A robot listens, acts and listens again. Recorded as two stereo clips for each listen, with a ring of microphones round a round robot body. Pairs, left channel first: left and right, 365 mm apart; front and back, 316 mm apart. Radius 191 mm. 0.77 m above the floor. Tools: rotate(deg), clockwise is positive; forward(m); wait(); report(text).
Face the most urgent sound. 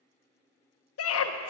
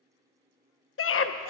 rotate(-45)
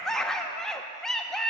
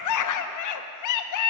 report("Facing the scream.")